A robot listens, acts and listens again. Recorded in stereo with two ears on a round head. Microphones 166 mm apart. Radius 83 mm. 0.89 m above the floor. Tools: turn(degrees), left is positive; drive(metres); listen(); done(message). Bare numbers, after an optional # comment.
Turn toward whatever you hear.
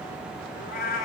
# The cat meowing: about 50° left or 130° left.
turn(50)
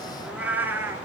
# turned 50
# So it is at 15° right.
turn(-15)
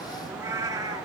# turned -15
# The cat meowing is now 20° right.
turn(-20)
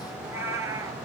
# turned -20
# The cat meowing is now 15° right.
turn(-15)
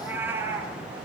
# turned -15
# The cat meowing is now 15° right.
turn(-15)
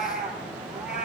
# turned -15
done("Found it: a cat meowing, straight ahead, 2 to 4 m away.")